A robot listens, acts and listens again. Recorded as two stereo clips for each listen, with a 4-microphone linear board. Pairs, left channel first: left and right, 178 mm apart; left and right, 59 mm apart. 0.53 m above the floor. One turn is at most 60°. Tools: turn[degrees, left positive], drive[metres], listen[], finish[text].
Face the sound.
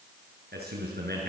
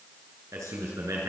Thought: The man speaking: about 70° right or 110° right.
Action: turn[-60]
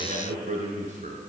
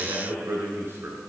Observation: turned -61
Thought: So it is at 45° right.
Action: turn[-45]
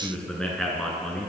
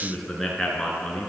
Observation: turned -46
Action: finish[Facing the man speaking, over 4 m away.]